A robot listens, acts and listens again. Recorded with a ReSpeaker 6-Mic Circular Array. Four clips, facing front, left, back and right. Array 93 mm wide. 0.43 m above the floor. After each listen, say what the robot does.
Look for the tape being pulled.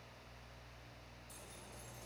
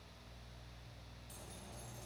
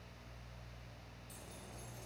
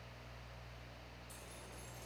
Keep listening.
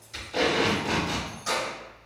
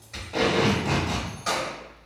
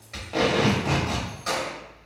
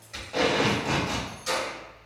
Turn 175° right.
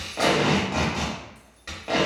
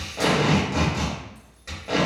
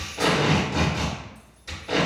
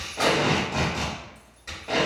Turn 10° left.
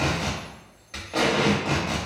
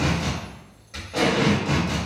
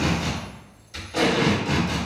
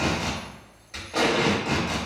Facing the tape being pulled.